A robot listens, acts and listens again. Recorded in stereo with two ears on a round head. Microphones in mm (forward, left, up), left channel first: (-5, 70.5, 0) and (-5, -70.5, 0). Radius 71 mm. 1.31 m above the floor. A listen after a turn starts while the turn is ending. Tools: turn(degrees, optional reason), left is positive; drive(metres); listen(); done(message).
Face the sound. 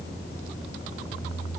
listen()
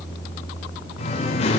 turn(degrees=40, reason="The singing: about 40° left or 140° left.")
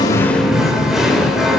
done("Facing the singing, 2 to 4 m away.")